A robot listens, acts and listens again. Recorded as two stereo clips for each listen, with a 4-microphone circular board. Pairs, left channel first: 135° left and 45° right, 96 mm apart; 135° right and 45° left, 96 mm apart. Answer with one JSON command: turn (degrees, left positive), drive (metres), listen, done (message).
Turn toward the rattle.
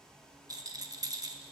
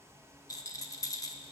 {"turn": -90}
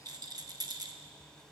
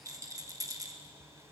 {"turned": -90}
{"done": "Facing the rattle."}